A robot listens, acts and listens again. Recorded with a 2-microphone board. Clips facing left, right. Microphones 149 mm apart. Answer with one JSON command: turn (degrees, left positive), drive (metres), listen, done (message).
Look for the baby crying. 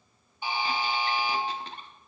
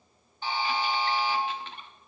{"listen": true}
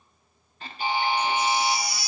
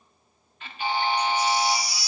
{"turn": 55}
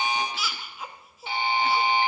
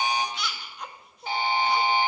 {"done": "Facing the baby crying."}